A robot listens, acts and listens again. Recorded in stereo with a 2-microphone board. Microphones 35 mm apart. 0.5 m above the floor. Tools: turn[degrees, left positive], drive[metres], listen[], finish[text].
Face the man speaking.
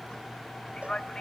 Thought: The man speaking: about 20° left or 160° left.
Action: turn[20]
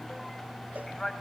Action: turn[30]
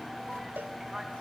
Action: listen[]
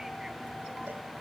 Action: listen[]
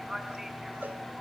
Thought: So it is at 10° right.
Action: turn[-10]
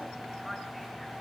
Action: listen[]
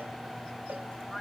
Action: listen[]
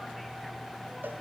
Action: finish[Facing where the man speaking came from. I can't hear it now.]